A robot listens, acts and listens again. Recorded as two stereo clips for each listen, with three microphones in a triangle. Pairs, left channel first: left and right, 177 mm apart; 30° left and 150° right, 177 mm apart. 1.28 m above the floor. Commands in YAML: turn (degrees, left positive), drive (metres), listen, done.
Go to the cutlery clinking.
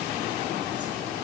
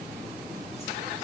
listen: true
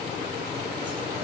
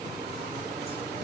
listen: true
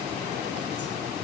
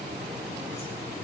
done: "I can't make out cutlery clinking to turn to."